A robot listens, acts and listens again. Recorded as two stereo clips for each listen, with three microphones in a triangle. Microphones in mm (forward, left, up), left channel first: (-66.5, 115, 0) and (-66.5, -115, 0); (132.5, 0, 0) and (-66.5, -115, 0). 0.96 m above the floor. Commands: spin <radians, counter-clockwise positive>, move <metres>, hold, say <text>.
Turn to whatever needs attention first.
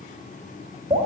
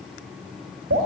hold
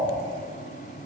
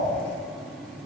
hold
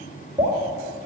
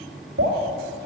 say I can't make out anything urgent to turn to.